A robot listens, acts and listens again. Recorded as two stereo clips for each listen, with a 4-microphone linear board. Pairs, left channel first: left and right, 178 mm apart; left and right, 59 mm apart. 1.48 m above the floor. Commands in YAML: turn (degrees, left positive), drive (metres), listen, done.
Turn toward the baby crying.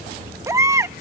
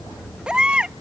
turn: -15
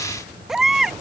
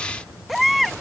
done: "Facing the baby crying."